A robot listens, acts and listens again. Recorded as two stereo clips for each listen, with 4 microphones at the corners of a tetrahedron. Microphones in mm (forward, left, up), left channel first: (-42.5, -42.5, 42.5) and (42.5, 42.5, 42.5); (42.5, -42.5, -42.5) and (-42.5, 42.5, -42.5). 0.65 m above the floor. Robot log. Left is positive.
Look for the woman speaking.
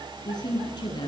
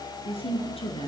note: The woman speaking: 85° right.
cmd yaw -85
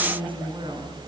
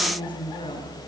end: Found it: a woman speaking, straight ahead.